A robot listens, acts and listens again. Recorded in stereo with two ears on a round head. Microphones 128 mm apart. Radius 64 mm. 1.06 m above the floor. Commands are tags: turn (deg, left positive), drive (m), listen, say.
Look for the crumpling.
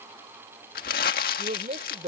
<turn deg="70"/>
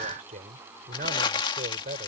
<turn deg="35"/>
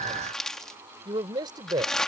<say>Found it: crumpling, straight ahead.</say>